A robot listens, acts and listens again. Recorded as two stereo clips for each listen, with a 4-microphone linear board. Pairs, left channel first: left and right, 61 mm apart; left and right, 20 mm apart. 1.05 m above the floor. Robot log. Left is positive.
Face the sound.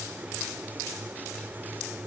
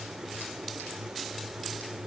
cmd idle
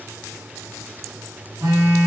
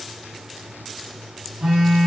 cmd yaw -90
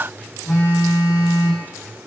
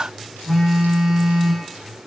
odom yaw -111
note: So it is at 15° left.
cmd yaw +15
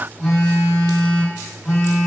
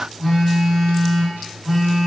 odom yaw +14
end: Found it: a phone buzzing, straight ahead.